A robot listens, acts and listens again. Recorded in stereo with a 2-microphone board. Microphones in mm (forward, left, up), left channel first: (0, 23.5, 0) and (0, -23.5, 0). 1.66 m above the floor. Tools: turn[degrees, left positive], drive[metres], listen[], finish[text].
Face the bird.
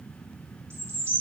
Thought: The bird: about 55° right or 125° right.
Action: turn[-55]
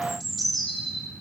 Action: finish[Facing the bird.]